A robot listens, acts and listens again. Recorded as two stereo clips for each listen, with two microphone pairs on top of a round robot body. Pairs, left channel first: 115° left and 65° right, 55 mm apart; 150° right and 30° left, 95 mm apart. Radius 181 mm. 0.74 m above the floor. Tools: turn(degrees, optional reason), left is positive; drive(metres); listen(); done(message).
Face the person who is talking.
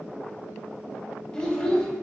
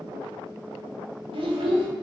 turn(degrees=40, reason="The child speaking: 40° left.")
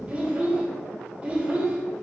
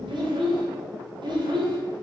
done("Facing the child speaking.")